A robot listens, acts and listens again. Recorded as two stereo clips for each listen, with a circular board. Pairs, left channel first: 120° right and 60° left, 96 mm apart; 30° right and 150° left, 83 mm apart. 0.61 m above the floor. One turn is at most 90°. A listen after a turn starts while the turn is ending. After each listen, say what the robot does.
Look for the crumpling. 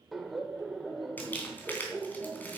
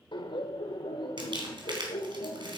Turn 90° left.
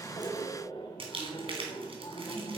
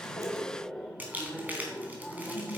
Turn 80° left.
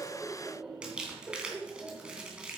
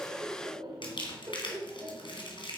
Turn 20° right.
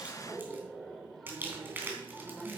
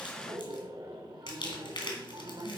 Turn 10° right.
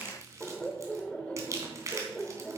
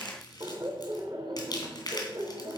Found it: crumpling, straight ahead, 2 to 4 m away.